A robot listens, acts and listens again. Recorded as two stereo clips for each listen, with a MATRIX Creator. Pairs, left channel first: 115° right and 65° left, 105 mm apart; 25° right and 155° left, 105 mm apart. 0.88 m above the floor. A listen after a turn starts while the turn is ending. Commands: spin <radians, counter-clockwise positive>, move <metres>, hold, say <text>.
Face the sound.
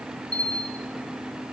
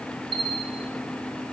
spin 2.97
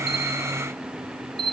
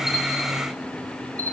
spin 0.79
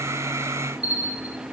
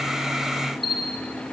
say Found it: a bell, straight ahead, 1 to 2 m away.